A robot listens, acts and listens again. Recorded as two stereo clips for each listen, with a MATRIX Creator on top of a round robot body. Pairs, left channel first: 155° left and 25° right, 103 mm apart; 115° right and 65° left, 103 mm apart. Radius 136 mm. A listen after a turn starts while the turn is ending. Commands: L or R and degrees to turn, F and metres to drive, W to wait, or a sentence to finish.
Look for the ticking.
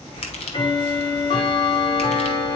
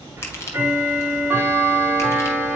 L135
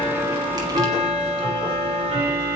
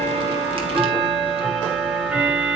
R10
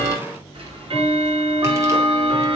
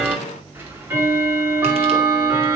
Facing the ticking.